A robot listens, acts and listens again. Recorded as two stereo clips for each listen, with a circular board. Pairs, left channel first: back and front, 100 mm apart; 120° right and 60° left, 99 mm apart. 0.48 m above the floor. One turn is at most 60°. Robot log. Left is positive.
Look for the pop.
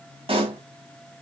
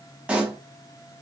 note: The pop: 20° right.
cmd yaw -20
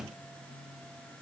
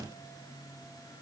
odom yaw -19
end: I heard a pop from this way, but can't make it out now.